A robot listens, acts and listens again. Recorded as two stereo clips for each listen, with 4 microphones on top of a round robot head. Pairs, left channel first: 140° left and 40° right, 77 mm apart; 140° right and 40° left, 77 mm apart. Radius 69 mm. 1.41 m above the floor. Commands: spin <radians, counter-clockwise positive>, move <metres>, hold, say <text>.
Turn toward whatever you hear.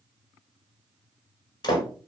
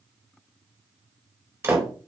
spin 1.75
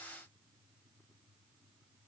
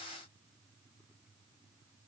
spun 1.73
say I heard a door slam from this way, but can't make it out now.